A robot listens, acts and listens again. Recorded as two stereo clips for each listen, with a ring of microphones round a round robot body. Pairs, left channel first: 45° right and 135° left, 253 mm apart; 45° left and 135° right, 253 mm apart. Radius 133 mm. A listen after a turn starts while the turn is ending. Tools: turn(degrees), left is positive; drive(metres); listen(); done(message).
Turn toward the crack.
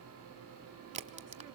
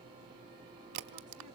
turn(degrees=-160)
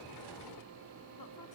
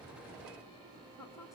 done("Facing where the crack came from. I can't hear it now.")